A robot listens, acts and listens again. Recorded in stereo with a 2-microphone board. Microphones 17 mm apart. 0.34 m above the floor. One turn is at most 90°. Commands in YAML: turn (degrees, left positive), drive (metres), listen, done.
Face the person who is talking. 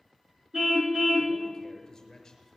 turn: 30
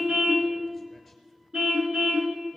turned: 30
listen: true
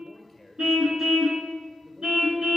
done: "Facing the man speaking."